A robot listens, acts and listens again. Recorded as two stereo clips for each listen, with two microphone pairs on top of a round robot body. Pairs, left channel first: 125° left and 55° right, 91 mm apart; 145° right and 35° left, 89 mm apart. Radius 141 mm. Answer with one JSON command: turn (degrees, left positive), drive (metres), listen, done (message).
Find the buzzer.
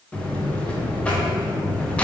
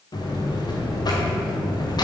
{"turn": -165}
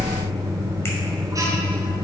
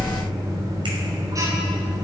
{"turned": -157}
{"done": "Facing the buzzer."}